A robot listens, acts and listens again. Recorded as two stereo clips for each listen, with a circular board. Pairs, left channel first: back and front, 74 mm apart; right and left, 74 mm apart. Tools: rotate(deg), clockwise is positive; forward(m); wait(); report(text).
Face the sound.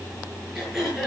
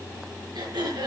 rotate(-85)
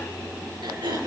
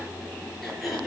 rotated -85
report("Facing the throat clearing, over 4 m away.")